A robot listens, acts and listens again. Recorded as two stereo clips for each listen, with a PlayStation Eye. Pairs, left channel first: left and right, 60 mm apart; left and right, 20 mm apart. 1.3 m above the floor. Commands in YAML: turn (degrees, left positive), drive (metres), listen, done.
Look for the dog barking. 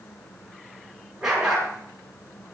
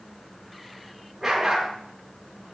turn: -30
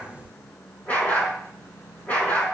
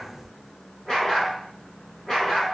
turn: 25
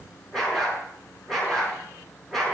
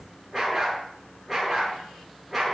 done: "Found it: a dog barking, straight ahead, over 4 m away."